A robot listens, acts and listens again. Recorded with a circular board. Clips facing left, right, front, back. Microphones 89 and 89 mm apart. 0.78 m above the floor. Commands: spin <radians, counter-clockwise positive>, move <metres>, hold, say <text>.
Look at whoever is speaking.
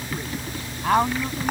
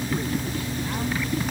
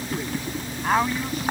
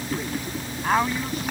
spin 1.57
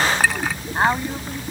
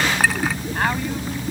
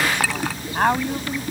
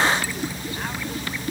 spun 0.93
spin 0.44
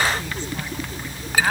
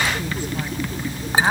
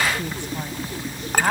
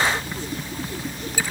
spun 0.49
spin -0.26
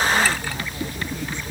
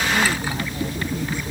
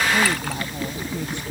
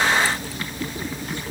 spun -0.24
hold
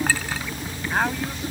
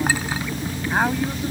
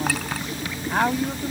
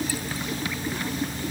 spin -0.17
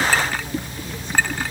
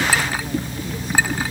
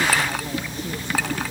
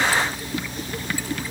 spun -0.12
hold
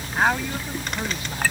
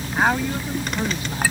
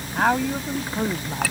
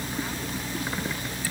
say Facing the woman speaking.